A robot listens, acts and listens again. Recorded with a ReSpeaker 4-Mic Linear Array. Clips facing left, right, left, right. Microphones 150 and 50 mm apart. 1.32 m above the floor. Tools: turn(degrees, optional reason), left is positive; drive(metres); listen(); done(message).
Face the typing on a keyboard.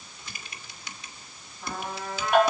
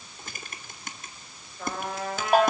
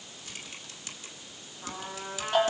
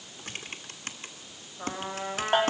turn(degrees=-50, reason="The typing on a keyboard: about 50° right or 130° right.")
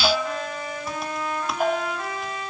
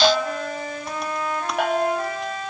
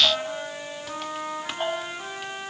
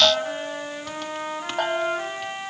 listen()
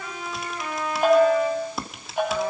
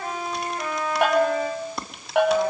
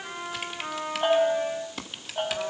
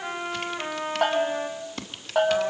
done("Found it: typing on a keyboard, straight ahead.")